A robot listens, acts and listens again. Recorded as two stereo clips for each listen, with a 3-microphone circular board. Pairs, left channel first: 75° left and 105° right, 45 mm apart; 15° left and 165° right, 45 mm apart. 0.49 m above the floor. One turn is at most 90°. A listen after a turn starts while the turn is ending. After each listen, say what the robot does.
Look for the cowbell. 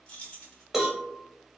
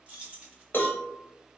Turn 25° right.
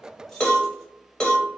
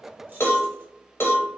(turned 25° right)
Found it: a cowbell, straight ahead.